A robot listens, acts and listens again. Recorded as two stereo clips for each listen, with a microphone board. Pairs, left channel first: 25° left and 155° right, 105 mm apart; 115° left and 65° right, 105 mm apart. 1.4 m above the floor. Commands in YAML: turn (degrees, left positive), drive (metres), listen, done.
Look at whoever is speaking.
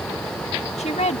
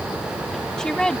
turn: 30
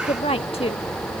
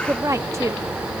done: "Facing the woman speaking."